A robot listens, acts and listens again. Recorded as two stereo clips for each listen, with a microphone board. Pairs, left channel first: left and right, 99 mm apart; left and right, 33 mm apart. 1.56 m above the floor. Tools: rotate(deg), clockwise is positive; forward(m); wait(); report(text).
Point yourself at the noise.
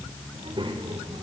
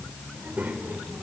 rotate(60)
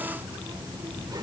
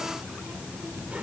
rotate(40)
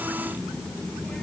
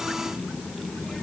rotate(-10)
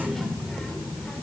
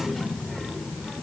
rotate(-10)
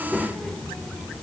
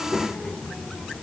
rotate(-10)
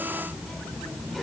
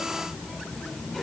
report("Found it: a child speaking, straight ahead, 2 to 4 m away.")